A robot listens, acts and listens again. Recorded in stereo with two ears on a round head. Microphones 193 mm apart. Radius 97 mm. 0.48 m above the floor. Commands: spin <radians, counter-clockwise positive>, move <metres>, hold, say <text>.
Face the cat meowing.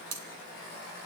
hold
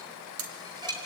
hold
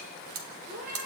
spin -0.70
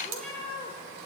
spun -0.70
say Facing the cat meowing, over 4 m away.